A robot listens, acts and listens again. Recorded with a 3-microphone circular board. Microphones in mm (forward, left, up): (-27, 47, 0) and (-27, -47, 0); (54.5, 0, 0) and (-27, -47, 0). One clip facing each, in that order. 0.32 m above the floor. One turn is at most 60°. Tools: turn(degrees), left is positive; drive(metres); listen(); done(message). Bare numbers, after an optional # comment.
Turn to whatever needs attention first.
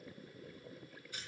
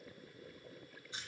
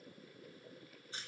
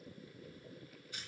listen()
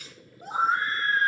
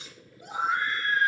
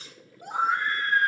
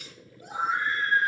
# The scream: 45° left.
turn(45)
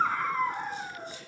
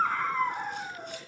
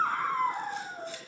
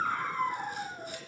done("Found it: a scream, straight ahead, 2 to 4 m away.")